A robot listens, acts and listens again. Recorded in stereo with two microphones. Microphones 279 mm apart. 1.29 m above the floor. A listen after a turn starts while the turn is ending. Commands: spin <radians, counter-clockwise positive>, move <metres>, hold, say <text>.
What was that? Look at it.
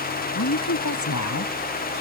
spin 1.57
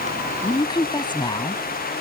spin 0.26
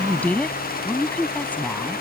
say Facing the woman speaking.